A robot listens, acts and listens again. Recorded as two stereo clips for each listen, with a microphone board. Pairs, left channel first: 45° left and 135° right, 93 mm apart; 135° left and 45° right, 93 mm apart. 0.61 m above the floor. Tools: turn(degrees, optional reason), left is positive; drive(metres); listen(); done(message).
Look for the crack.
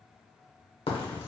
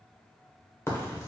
turn(degrees=70, reason="The crack: 70° left.")
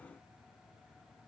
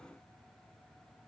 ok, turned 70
done("Facing where the crack came from. I can't hear it now.")